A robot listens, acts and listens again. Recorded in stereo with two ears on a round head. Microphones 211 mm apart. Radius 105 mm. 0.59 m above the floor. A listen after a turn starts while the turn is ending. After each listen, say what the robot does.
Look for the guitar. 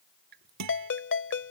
Turn 90° right.
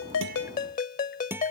Turn 10° right.
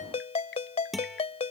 Facing the guitar.